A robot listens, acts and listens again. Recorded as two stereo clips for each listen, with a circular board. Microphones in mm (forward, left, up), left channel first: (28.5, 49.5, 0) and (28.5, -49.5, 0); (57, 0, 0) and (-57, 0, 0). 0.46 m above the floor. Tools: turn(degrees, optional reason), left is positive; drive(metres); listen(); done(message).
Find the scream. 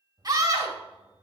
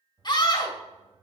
turn(degrees=-45, reason="The scream: 45° right.")
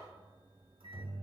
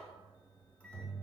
listen()
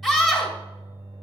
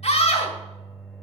done("Found it: a scream, straight ahead.")